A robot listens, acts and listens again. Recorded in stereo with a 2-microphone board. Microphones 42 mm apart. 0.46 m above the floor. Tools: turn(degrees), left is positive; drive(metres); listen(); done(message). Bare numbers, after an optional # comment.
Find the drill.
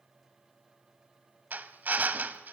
# The drill: about 45° right or 135° right.
turn(-45)
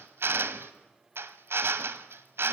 # So it is at 90° right.
turn(-90)
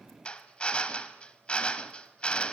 # The drill is now 30° left.
turn(30)
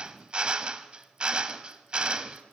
# The drill is now 25° right.
turn(-25)
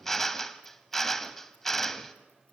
# The drill is now 10° left.
turn(10)
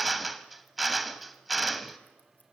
done("Found it: a drill, straight ahead, 1 to 2 m away.")